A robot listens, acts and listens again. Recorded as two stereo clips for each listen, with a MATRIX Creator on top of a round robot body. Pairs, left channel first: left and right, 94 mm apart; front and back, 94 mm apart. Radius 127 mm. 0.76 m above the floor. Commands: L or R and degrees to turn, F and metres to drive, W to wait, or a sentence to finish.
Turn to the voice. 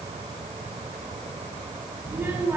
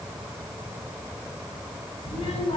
R20
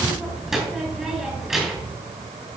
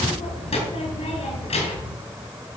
Facing the child speaking.